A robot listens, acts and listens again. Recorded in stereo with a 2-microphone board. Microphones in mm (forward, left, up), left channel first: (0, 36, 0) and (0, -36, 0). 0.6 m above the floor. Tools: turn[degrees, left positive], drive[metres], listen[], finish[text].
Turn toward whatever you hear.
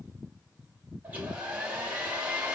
Thought: The hair dryer: about 20° right or 160° right.
Action: turn[-20]
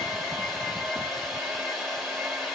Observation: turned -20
Action: finish[Found it: a hair dryer, straight ahead, 1 to 2 m away.]